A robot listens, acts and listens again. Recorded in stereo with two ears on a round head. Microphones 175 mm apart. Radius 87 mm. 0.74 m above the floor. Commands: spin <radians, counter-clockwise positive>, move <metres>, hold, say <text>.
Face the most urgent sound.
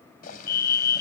spin 0.96
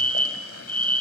spin 0.17
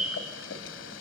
say Found it: a fire alarm, straight ahead.